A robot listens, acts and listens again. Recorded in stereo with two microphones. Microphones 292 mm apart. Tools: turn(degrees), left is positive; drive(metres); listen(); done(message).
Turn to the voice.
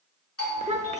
turn(degrees=-25)
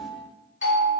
listen()
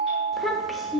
done("Found it: a child speaking, straight ahead, 1 to 2 m away.")